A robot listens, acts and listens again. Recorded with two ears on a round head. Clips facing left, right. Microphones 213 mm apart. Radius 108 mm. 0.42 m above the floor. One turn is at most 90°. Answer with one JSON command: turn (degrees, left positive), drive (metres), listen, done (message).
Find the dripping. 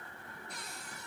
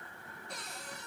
{"listen": true}
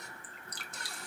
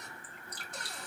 {"turn": 60}
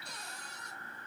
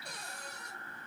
{"listen": true}
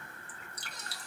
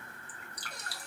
{"turn": 25}
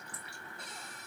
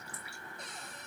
{"listen": true}
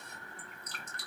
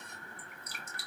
{"turn": -10}
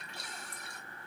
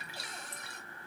{"done": "Found it: dripping, straight ahead."}